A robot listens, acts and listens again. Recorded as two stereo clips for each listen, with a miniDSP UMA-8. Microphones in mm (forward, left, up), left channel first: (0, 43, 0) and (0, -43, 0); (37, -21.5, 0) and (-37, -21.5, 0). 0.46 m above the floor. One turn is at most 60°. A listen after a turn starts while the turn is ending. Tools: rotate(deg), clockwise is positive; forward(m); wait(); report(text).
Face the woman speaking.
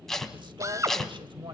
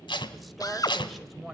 rotate(60)
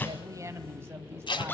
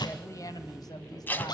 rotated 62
rotate(30)
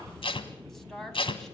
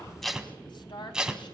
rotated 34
report("Found it: a woman speaking, straight ahead, 2 to 4 m away.")